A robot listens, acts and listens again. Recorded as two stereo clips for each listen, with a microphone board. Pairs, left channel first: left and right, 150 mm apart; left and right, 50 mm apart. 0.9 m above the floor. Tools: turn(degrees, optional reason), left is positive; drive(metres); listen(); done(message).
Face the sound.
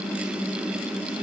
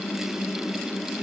listen()
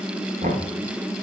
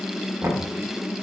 turn(degrees=-70, reason="The knocking: about 70° right or 110° right.")
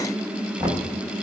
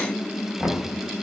turn(degrees=-25, reason="So it is at 25° right.")
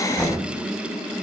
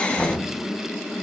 done("Found it: knocking, straight ahead, under 1 m away.")